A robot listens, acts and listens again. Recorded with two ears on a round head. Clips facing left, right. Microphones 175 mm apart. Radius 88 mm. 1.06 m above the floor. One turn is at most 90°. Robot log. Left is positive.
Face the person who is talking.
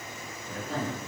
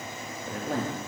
note: The man speaking: about 45° right or 135° right.
cmd yaw -45
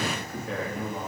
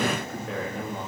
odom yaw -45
end: Facing the man speaking, 1 to 2 m away.